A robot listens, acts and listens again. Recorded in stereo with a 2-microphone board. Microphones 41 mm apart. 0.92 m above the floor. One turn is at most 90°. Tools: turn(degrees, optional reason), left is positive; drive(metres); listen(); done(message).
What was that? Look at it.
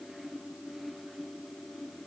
listen()
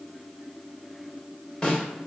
turn(degrees=20, reason="The snare drum: about 20° left or 160° left.")
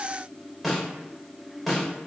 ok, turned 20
done("Facing the snare drum, 2 to 4 m away.")